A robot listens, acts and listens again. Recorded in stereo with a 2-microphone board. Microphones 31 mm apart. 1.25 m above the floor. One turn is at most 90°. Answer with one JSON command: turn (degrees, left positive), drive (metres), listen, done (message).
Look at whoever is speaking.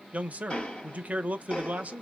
{"turn": -55}
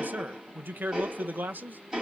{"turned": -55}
{"turn": -75}
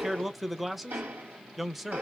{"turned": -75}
{"done": "Found it: a man speaking, straight ahead."}